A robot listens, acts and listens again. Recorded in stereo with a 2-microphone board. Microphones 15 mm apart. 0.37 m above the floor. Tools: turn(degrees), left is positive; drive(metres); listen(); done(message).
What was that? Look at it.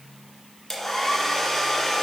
turn(degrees=20)
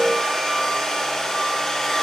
turn(degrees=140)
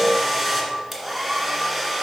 done("Found it: a hair dryer, straight ahead, 1 to 2 m away.")